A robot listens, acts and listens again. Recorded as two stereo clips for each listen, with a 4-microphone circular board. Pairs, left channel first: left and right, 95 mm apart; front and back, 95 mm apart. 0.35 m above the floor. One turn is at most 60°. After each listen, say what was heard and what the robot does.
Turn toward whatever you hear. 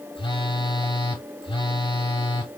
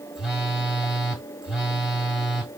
The phone buzzing: 95° left. Turn 60° left.
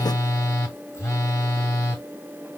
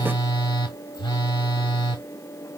The phone buzzing is now 30° left. Turn 30° left.
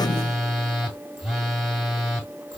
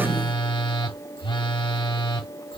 Found it: a phone buzzing, straight ahead.